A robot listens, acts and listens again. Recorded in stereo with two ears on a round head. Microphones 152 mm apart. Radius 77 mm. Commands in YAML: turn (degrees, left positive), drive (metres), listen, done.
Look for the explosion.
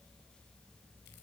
listen: true
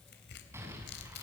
turn: -15
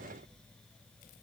listen: true
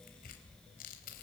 done: "I heard an explosion, but can't make it out now. It was about straight ahead or 150° right."